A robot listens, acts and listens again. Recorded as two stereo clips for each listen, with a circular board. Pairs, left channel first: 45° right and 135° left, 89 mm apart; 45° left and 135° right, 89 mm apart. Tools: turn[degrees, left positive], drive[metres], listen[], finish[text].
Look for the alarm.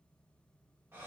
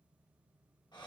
Action: listen[]
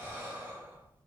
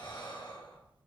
Action: listen[]
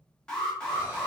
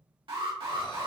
Thought: The alarm: 125° right.
Action: turn[-125]
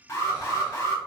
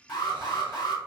Thought: The alarm is now 10° left.
Action: turn[10]
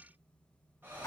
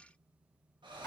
Action: listen[]
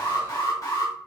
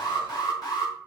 Action: finish[Found it: an alarm, straight ahead, 1 to 2 m away.]